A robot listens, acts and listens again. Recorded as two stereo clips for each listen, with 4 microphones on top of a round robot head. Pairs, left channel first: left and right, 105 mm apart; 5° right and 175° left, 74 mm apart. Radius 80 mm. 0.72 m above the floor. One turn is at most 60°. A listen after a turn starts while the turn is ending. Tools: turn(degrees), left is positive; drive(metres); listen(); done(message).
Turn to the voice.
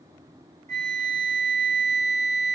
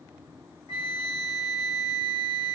listen()
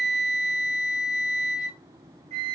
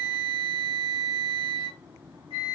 listen()
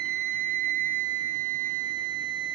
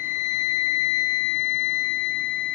done("I can't make out anyone speaking, only a flute.")